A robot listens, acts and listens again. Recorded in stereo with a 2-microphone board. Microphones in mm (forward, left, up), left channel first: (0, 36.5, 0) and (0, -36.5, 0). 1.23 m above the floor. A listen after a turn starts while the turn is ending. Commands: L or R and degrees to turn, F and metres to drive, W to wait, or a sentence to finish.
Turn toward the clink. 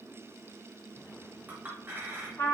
R30
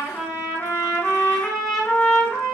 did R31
W
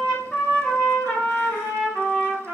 W
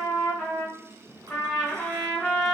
I heard a clink, but can't make it out now. It was about 5° left or 120° right.